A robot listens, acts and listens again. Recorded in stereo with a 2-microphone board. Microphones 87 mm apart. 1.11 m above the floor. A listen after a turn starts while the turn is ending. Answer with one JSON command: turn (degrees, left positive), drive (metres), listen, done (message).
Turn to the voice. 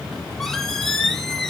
{"listen": true}
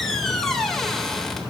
{"listen": true}
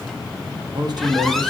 {"turn": -55}
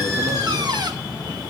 {"listen": true}
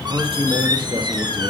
{"turn": -70}
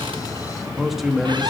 {"done": "Found it: a man speaking, straight ahead, 1 to 2 m away."}